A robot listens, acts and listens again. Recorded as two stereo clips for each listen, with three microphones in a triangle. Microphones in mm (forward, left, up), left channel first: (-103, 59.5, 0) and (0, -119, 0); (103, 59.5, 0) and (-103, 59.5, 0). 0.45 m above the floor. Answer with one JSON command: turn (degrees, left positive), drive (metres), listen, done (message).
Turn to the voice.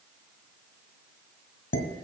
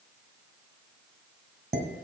{"listen": true}
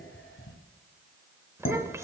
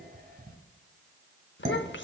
{"turn": 15}
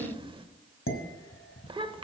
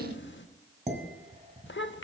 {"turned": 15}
{"done": "Facing the child speaking, under 1 m away."}